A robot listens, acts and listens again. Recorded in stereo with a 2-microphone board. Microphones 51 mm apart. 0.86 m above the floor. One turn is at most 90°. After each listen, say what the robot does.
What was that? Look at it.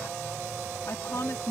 Turn 60° left.
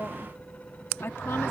Turn 50° left.
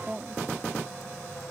Turn 10° right.
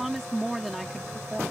Facing the woman speaking.